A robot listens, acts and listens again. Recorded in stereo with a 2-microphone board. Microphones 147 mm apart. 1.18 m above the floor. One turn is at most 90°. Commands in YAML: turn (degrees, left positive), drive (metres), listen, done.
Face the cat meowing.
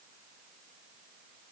listen: true
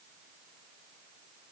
listen: true
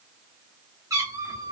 turn: -30
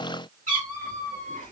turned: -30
turn: -90
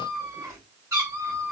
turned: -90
turn: -20
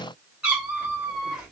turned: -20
done: "Found it: a cat meowing, straight ahead, 2 to 4 m away."